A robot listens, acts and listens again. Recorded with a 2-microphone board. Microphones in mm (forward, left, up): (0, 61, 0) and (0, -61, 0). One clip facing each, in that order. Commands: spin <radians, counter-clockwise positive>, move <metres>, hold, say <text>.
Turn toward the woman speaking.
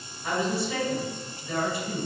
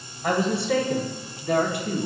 spin -1.05
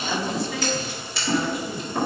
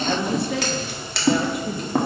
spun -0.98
spin -1.22
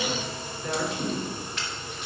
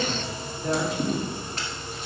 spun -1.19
spin -0.52
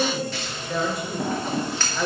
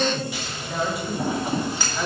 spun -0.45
say Facing the woman speaking.